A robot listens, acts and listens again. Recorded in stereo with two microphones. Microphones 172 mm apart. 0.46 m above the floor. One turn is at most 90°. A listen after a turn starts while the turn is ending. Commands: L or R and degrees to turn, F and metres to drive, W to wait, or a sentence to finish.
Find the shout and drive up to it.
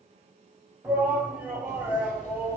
R30
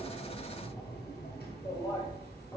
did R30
L20
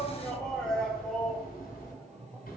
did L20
F1.0
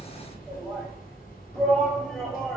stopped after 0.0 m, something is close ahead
Blocked. The shout is further on, straight ahead.